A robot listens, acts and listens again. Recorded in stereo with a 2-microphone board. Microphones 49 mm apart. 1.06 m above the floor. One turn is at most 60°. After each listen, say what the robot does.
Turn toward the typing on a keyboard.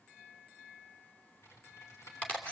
Turn 60° left.
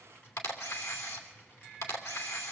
Turn 45° left.
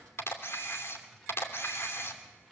Facing the typing on a keyboard, 2 to 4 m away.